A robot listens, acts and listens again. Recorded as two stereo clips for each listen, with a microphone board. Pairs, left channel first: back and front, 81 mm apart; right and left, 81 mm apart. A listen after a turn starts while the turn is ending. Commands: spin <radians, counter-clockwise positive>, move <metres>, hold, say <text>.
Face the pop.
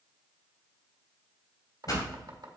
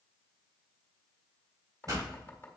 spin 2.36
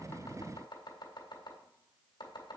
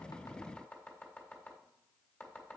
say Facing where the pop came from. I can't hear it now.